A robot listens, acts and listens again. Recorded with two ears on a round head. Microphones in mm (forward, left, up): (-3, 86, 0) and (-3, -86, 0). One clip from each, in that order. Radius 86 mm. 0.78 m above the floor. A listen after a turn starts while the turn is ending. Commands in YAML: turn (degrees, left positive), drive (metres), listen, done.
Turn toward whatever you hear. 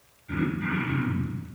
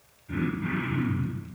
turn: 40
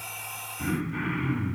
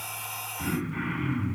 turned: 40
done: "Found it: throat clearing, straight ahead."